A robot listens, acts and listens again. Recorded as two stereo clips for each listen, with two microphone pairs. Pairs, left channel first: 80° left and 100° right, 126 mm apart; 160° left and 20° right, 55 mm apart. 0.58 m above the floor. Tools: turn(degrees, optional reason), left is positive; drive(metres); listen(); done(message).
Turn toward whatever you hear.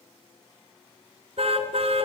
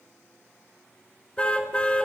turn(degrees=-135, reason="The car horn: 135° right.")
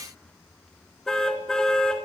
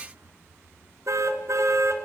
done("Facing the car horn, 2 to 4 m away.")